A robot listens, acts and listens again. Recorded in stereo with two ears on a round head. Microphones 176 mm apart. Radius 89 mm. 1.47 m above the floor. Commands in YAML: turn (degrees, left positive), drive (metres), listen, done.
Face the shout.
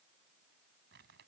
listen: true
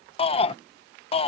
turn: 30
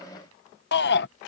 turn: 120
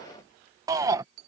turn: -15
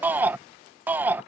turn: -10
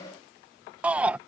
done: "Found it: a shout, straight ahead."